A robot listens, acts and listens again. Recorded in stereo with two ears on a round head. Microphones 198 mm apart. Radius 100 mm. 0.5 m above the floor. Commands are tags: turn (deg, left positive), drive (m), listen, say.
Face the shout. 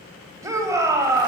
<turn deg="-15"/>
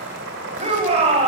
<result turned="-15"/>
<turn deg="-150"/>
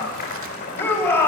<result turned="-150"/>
<turn deg="10"/>
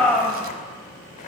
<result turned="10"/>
<say>Facing the shout, 2 to 4 m away.</say>